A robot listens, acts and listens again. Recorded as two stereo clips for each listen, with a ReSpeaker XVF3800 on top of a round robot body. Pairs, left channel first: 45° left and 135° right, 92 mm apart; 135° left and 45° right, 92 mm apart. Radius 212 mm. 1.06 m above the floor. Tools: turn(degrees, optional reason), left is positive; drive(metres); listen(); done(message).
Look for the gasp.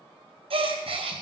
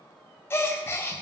turn(degrees=-160, reason="The gasp: 160° right.")
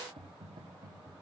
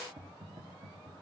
done("Facing where the gasp came from. I can't hear it now.")